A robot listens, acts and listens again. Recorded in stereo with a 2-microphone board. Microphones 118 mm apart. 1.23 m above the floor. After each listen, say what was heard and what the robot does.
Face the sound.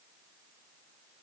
Keep listening.
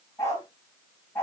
The dog barking: about 20° left or 160° left. Turn 20° left.
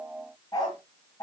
The dog barking: about 30° left or 150° left. Turn 30° left.
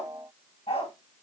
So it is at 125° left. Turn 125° left.
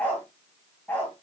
The dog barking is now 15° left. Turn 15° left.
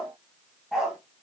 Facing the dog barking, 2 to 4 m away.